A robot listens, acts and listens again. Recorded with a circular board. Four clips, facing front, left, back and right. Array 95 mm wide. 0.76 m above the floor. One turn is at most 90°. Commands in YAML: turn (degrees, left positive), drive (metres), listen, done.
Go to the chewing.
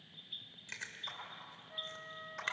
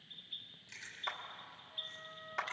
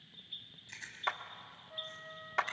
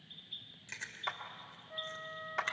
turn: -40
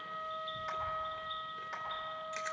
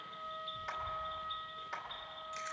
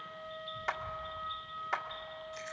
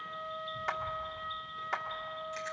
turn: -10
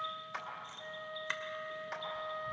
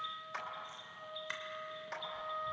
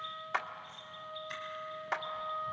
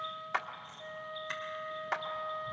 drive: 1.0
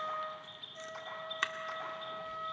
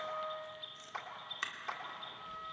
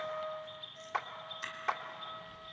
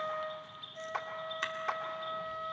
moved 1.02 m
turn: -10
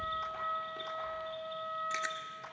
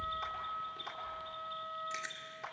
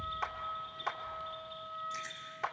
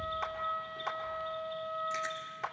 drive: 1.0
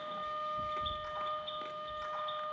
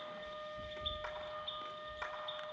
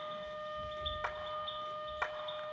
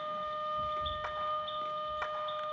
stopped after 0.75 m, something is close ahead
done: "I am next to the chewing."